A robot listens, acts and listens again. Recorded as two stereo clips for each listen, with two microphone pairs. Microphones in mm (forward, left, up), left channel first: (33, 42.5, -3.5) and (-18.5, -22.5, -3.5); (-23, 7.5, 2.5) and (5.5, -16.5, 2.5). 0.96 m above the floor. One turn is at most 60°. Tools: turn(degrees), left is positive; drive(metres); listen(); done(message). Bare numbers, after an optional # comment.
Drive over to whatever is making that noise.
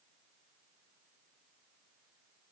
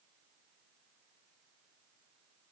listen()
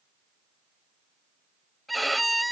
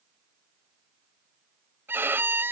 # The violin: 35° right.
turn(-35)
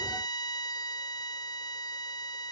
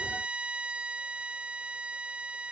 # The violin is now 20° left.
turn(20)
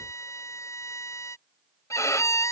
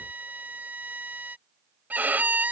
drive(1.0)
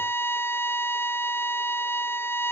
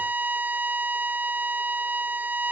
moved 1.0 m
# The violin is now 10° right.
turn(-10)
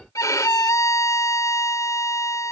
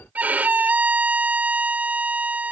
drive(1.0)
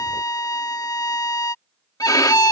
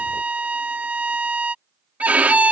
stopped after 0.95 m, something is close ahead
# The violin is now 10° left.
turn(10)
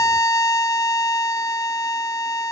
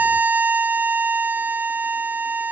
done("Arrived at the violin, straight ahead.")